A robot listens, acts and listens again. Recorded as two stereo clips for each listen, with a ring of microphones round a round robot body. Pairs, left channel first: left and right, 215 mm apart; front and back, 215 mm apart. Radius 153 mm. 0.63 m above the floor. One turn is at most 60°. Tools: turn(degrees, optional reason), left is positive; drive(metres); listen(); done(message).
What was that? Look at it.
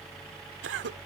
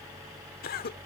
turn(degrees=-55, reason="The cough: 55° right.")
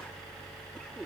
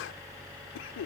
listen()
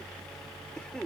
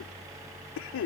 done("Facing the cough.")